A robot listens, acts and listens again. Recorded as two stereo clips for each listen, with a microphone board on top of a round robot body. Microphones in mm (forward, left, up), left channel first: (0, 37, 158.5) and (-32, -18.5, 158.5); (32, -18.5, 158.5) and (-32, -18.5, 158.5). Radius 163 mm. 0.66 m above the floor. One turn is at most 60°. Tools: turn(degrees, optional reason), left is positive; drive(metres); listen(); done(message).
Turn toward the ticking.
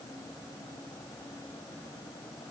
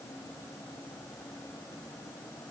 listen()
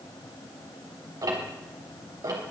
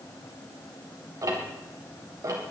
turn(degrees=-60, reason="The ticking: 145° right.")
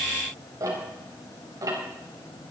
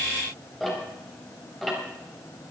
turn(degrees=-60, reason="The ticking is now 85° right.")
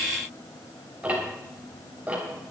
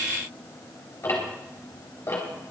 turn(degrees=-50, reason="The ticking is now 50° right.")
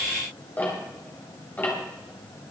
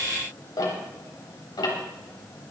done("Facing the ticking.")